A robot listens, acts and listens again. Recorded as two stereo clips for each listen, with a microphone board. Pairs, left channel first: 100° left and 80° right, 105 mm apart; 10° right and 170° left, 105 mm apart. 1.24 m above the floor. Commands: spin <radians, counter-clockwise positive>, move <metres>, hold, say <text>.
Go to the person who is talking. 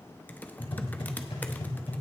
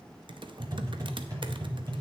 hold
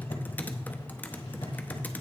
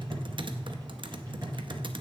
hold
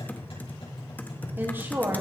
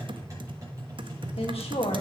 spin -0.17
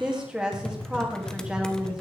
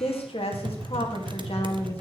move 1.0
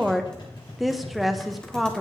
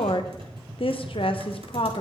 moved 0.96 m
spin 0.17
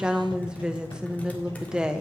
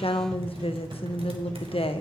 move 1.0
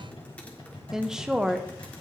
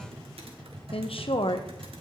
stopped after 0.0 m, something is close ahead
say I am next to the woman speaking.